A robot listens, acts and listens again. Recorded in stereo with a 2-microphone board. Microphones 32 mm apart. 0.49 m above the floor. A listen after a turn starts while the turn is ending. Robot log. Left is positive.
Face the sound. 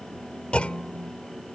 note: The clunk: about 45° left or 135° left.
cmd yaw +45
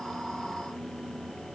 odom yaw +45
cmd idle
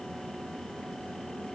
end: I heard a clunk, but can't make it out now. It was about straight ahead or 90° left.